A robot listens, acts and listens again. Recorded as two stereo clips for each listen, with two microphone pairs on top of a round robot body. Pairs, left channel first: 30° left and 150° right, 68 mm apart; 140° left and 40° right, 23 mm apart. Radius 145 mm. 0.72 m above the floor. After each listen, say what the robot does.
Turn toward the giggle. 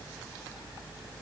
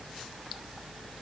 Keep listening.
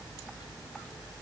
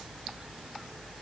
Keep listening.
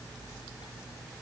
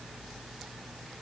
I can't make out a giggle to turn to.